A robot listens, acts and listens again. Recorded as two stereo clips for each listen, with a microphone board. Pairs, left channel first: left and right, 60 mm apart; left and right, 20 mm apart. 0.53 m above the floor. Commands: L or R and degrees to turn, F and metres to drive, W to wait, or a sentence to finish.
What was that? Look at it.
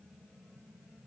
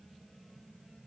W
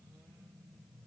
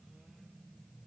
W
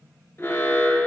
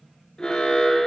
L45
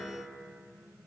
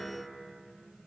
W
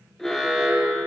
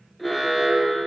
Found it: an alarm, straight ahead.